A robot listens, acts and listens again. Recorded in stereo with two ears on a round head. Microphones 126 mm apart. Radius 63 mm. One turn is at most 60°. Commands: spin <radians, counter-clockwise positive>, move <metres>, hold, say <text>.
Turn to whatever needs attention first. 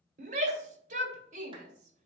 spin -0.96
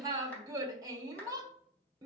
spin -0.52
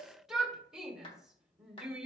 say Facing the shout.